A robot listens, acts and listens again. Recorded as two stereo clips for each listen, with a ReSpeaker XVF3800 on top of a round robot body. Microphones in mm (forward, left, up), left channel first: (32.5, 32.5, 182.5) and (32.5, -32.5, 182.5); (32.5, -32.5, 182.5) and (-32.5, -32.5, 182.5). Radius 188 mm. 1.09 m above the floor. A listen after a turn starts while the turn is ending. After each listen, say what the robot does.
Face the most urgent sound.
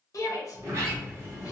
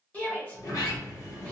Turn 65° left.
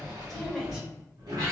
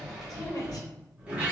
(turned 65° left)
Found it: a shout, straight ahead, 1 to 2 m away.